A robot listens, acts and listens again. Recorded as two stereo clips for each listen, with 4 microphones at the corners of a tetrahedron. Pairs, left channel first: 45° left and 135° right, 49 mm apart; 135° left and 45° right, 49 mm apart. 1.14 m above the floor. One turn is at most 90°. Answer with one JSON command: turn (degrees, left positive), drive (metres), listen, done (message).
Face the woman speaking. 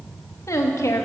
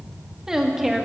{"turn": 40}
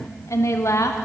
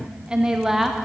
{"turn": 40}
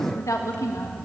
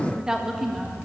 {"turn": 40}
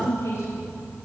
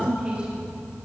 {"turn": 25}
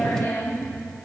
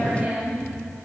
{"turn": 15}
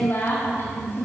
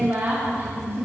{"done": "Found it: a woman speaking, straight ahead."}